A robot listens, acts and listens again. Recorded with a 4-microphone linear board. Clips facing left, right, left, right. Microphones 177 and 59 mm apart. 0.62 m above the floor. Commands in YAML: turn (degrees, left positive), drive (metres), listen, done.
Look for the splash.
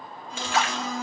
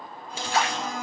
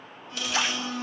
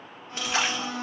turn: -35
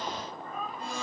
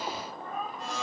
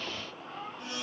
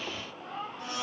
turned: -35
listen: true
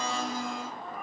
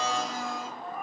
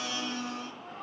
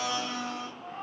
done: "I heard a splash, but can't make it out now. It was about straight ahead or 110° right."